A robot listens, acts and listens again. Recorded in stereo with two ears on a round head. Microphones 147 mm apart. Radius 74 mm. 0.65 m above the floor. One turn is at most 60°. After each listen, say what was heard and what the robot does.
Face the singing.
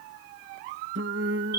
Turn 60° right.
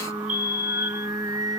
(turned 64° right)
So it is at 20° right. Turn 20° right.
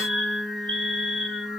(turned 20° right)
Facing the singing.